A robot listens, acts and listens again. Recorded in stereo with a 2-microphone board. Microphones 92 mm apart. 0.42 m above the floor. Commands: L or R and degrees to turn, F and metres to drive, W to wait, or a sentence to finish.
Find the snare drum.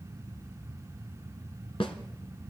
L90
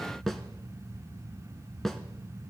Facing the snare drum, 1 to 2 m away.